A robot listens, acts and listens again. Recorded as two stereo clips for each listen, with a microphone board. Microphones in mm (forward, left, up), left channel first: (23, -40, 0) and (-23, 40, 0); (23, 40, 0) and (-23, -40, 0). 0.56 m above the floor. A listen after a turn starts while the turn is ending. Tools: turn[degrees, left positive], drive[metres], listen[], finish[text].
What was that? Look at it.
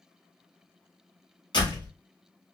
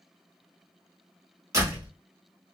Thought: The door slam: 70° right.
Action: turn[-70]
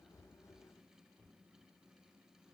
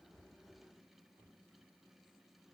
Action: finish[Facing where the door slam came from. I can't hear it now.]